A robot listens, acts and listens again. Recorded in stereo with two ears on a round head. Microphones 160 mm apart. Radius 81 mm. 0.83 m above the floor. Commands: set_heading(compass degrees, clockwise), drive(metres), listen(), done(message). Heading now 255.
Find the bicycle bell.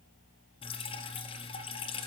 listen()
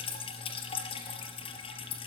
listen()
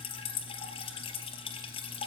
done("I can't make out a bicycle bell, only dripping.")